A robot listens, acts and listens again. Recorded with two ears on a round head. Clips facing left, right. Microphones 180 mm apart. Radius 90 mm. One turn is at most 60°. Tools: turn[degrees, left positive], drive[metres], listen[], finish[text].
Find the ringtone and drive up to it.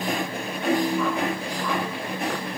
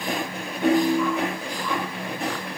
Thought: The ringtone: about 55° right or 125° right.
Action: turn[-55]
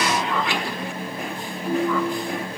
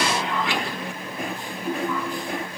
Action: drive[1.0]
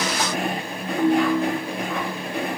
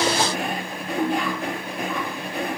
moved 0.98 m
Thought: The ringtone is now 10° right.
Action: turn[-10]
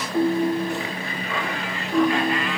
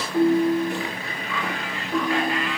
Action: drive[1.0]
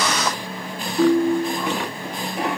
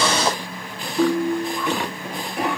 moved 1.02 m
Action: drive[1.0]
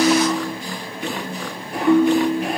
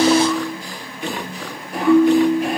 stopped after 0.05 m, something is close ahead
Action: finish[Arrived at the ringtone, straight ahead.]